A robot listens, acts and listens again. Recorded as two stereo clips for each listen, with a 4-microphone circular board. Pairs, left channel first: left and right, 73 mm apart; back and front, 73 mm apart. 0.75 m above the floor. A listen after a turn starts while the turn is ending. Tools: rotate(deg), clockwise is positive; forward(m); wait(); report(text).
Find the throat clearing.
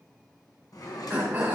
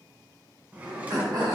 rotate(25)
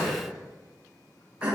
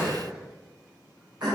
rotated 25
rotate(20)
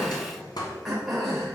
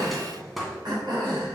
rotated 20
report("Found it: throat clearing, straight ahead, 2 to 4 m away.")